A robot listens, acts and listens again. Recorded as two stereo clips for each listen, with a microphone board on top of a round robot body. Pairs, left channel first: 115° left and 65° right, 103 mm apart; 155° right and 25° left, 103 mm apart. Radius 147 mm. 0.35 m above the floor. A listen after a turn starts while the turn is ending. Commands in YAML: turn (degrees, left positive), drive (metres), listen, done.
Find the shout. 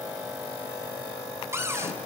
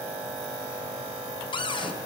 listen: true
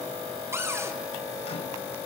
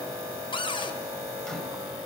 listen: true
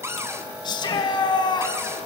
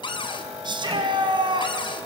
turn: 65
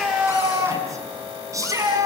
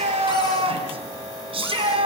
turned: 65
turn: -10
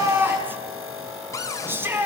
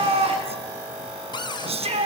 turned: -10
done: "Found it: a shout, straight ahead."